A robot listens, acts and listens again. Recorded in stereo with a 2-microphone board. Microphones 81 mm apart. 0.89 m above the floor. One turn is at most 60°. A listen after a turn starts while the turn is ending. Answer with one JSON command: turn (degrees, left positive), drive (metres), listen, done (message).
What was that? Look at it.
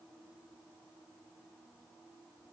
{"listen": true}
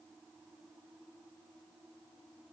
{"listen": true}
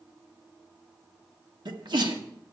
{"turn": -60}
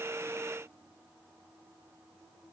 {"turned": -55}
{"listen": true}
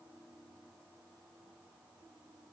{"done": "I heard a sneeze, but can't make it out now. It was about 20° right or 50° right."}